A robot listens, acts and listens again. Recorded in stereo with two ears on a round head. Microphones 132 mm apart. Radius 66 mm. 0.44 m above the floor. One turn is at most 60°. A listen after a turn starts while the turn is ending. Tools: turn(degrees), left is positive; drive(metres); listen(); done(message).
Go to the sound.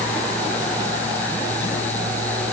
listen()
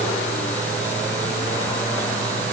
listen()
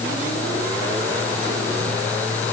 done("I can't make out anything to turn to.")